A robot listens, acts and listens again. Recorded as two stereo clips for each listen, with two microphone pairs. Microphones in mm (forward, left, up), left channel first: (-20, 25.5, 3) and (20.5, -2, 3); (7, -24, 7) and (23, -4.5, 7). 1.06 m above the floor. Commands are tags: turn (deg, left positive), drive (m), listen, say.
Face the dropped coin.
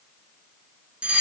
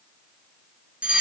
<listen/>
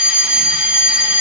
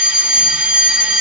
<listen/>
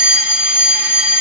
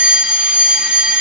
<say>I can't make out a dropped coin, only a fire alarm.</say>